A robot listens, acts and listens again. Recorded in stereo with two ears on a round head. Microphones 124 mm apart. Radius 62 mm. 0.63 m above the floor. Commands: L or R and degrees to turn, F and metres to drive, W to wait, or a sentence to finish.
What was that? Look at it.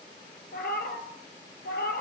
L90
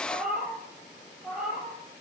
Found it: a cat meowing, straight ahead.